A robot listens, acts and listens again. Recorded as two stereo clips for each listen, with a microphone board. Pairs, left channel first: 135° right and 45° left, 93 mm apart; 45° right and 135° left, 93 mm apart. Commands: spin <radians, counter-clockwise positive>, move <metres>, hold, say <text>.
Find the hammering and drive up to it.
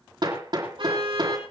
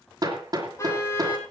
spin 1.48
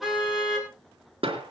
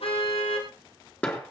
spin 0.52
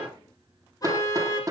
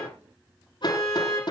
spin -0.17
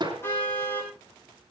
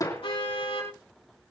move 1.0
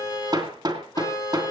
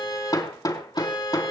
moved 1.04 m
move 1.0
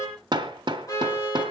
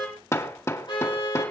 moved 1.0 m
spin 0.17
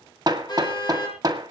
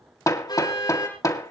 move 1.0
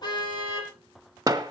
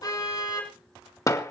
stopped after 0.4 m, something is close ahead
say I am next to the hammering.